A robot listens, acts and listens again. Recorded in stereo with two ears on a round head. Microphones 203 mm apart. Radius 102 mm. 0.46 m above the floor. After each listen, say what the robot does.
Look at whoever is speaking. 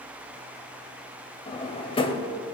Keep listening.
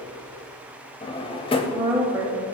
Turn 30° right.
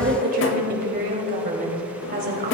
Turn 135° right.
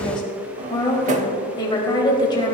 Turn 20° left.
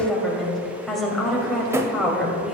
Found it: a woman speaking, straight ahead, 2 to 4 m away.